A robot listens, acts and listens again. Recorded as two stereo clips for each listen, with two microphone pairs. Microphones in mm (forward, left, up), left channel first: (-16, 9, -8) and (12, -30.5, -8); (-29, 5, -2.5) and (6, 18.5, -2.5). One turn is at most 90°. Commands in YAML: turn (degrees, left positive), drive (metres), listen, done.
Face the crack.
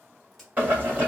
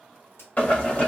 turn: -90
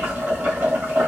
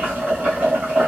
turn: -60
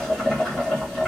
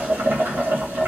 done: "Facing where the crack came from. I can't hear it now."